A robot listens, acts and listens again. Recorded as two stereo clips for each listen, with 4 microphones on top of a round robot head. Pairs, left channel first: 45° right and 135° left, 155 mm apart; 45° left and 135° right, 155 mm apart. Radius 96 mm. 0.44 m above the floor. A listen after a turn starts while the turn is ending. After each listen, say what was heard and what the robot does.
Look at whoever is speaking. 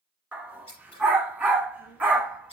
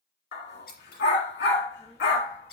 The child speaking: 30° right. Turn 30° right.
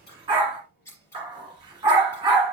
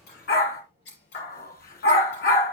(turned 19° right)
The child speaking is now 10° right. Turn 10° right.
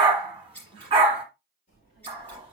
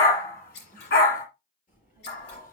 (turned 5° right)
Found it: a child speaking, straight ahead.